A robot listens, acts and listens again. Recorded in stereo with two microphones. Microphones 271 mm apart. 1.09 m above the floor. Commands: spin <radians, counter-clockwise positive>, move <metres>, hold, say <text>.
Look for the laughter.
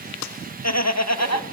spin 1.22
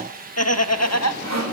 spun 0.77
spin 1.22
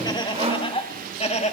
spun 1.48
spin 0.44
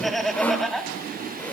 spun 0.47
say Facing the laughter.